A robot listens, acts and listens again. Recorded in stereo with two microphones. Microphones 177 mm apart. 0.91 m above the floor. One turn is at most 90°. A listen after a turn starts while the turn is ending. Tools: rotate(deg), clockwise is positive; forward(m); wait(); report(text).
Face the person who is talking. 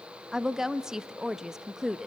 rotate(30)
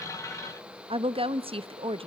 rotate(90)
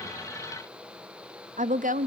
rotate(55)
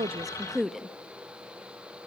report("Found it: a woman speaking, straight ahead.")